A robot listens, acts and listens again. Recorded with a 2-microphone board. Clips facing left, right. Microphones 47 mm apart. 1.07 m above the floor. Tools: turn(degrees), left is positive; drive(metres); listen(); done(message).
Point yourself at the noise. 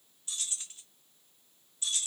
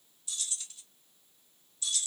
turn(degrees=35)
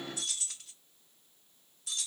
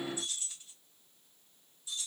turn(degrees=110)
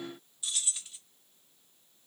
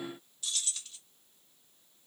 turn(degrees=15)
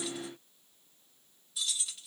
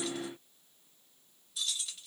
done("Found it: keys jangling, straight ahead.")